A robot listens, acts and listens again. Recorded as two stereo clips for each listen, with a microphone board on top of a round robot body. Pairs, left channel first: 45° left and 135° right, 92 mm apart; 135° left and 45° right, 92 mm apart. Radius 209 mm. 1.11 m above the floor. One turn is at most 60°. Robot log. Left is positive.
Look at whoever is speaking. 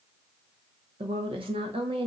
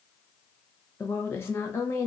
note: The woman speaking: 160° right.
cmd yaw -60
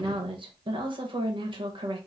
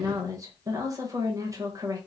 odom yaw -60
note: The woman speaking is now 100° right.
cmd yaw -60
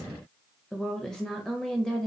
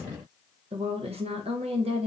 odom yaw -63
note: The woman speaking is now 40° right.
cmd yaw -40
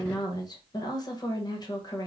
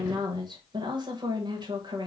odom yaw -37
end: Facing the woman speaking.